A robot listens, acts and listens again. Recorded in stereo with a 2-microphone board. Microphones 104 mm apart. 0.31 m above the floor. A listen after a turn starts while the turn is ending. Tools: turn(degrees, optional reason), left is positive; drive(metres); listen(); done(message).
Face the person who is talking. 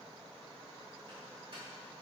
listen()
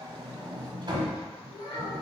turn(degrees=55, reason="The child speaking: about 55° left or 125° left.")
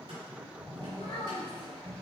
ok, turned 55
turn(degrees=70, reason="So it is at 70° left.")
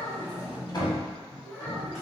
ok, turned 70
turn(degrees=20, reason="The child speaking is now 20° left.")
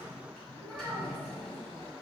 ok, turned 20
listen()
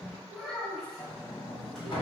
done("Facing the child speaking, 1 to 2 m away.")